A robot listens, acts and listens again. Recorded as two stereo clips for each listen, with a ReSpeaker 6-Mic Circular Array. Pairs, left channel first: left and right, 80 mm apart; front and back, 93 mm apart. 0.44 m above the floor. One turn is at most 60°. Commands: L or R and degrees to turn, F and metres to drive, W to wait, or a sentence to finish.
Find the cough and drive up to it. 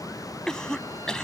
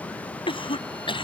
L10
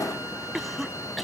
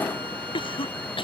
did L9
F1.0
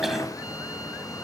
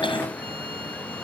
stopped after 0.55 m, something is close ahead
W
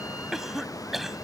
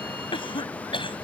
Something is in my way. I am facing the cough but have not reached it.